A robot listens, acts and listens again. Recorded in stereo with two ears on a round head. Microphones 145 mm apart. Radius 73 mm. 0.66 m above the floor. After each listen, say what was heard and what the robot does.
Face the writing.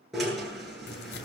The writing: about 70° left or 110° left. Turn 70° left.
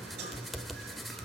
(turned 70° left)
Facing the writing, 1 to 2 m away.